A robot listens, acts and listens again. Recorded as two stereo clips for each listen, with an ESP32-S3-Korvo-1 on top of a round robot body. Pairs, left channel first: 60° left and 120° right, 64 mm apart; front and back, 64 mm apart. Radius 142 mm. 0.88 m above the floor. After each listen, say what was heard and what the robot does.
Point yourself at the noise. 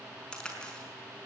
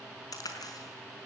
The crack: 15° right. Turn 15° right.
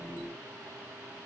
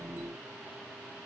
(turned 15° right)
Facing where the crack came from. I can't hear it now.